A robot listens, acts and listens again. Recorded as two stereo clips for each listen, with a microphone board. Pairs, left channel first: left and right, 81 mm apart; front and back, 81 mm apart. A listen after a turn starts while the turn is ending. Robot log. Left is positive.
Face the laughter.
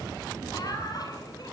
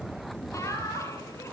note: The laughter: 50° left.
cmd yaw +50
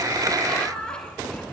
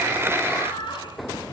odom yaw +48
note: The laughter is now 10° left.
cmd yaw +10
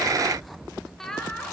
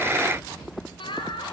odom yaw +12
end: Facing the laughter.